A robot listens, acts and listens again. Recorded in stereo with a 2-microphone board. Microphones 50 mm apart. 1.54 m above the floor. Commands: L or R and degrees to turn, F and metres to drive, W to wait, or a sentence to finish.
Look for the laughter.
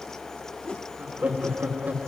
R35
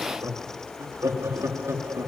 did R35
R100
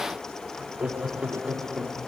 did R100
R20
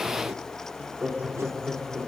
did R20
R10
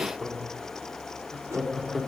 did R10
Facing the laughter, over 4 m away.